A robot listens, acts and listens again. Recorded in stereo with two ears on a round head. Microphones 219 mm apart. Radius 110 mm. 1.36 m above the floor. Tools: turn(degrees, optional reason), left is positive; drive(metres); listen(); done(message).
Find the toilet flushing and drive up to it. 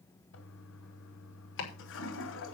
turn(degrees=55, reason="The toilet flushing: about 55° left or 125° left.")
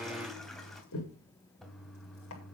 drive(metres=1.0)
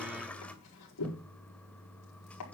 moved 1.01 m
drive(metres=1.0)
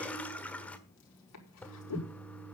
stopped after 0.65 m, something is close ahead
turn(degrees=10, reason="The toilet flushing is now 10° left.")
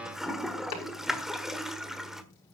done("Arrived at the toilet flushing, straight ahead.")